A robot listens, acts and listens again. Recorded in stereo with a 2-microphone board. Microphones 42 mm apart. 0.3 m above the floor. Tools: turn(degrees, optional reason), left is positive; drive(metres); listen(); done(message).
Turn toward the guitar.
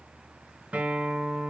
turn(degrees=-35, reason="The guitar: about 35° right or 145° right.")
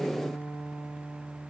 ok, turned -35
turn(degrees=-105, reason="So it is at 105° right.")
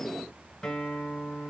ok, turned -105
turn(degrees=15, reason="The guitar is now 15° left.")
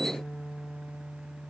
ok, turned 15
done("Found it: a guitar, straight ahead, 2 to 4 m away.")